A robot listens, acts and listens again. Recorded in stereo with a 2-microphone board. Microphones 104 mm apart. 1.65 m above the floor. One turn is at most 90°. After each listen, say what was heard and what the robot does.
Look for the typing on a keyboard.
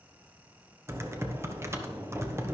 The typing on a keyboard: about 25° right or 155° right. Turn 25° right.
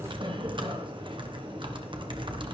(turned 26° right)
So it is at 130° right. Turn 90° right.
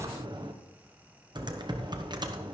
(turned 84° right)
The typing on a keyboard is now 45° right. Turn 45° right.
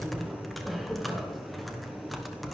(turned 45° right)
Facing the typing on a keyboard.